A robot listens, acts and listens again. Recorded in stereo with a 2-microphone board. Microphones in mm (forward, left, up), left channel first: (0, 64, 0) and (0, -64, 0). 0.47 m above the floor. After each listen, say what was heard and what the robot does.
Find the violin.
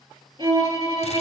The violin: about 40° right or 140° right. Turn 40° right.
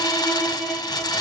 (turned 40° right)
Facing the violin, 1 to 2 m away.